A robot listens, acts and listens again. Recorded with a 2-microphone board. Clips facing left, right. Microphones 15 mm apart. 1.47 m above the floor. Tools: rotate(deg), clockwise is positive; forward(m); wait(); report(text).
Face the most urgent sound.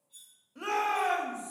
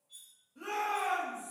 rotate(-60)
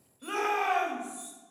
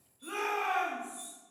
rotate(-60)
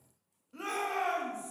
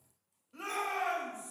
report("Facing the shout, 1 to 2 m away.")